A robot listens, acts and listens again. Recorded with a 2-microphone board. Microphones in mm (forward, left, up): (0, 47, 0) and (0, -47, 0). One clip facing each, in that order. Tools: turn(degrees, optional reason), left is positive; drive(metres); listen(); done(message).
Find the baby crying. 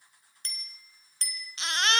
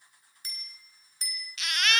turn(degrees=30, reason="The baby crying: about 30° left or 150° left.")
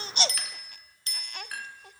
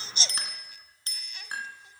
turn(degrees=115, reason="So it is at 115° left.")
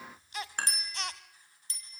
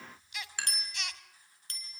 turn(degrees=40, reason="The baby crying is now 40° left.")
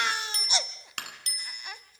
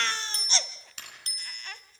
turn(degrees=15, reason="The baby crying is now 15° left.")
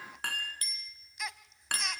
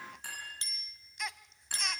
done("Found it: a baby crying, straight ahead.")